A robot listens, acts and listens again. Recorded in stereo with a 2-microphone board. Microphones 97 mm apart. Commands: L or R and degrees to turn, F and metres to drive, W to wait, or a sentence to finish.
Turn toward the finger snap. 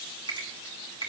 R55
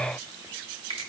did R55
R75
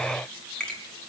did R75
L10
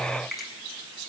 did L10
Facing the finger snap.